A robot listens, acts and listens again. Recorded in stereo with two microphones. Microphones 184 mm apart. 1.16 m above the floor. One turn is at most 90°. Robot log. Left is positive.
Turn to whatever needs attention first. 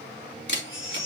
cmd yaw +90
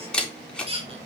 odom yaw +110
note: So it is at 30° right.
cmd yaw -30
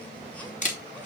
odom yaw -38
cmd idle
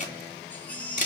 end: Facing the baby crying.